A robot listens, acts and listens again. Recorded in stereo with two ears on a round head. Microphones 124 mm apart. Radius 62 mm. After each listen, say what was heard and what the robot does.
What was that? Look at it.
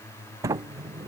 The sliding door: about 20° right or 160° right. Turn 20° right.
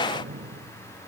So it is at 140° right. Turn 140° right.
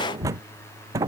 The sliding door is now 25° right. Turn 25° right.
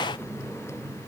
The sliding door is now 10° left. Turn 10° left.
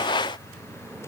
Found it: a sliding door, straight ahead.